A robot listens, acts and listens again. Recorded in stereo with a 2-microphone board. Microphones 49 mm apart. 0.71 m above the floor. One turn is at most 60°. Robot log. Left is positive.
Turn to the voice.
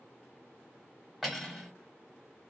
cmd idle
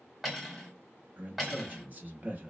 note: The man speaking: about 35° right or 145° right.
cmd yaw -35
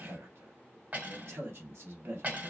note: So it is at 110° right.
cmd yaw -60
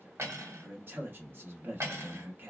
note: The man speaking is now 55° right.
cmd yaw -55
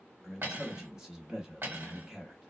note: The man speaking is now 15° right.
cmd yaw -15
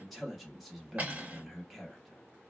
end: Found it: a man speaking, straight ahead.